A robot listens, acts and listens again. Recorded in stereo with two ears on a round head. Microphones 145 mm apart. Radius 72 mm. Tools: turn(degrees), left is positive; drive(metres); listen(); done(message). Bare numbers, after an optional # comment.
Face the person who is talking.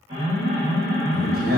# The man speaking: about 60° right or 120° right.
turn(-60)
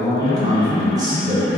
# So it is at 25° right.
turn(-25)
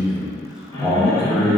done("Facing the man speaking, 1 to 2 m away.")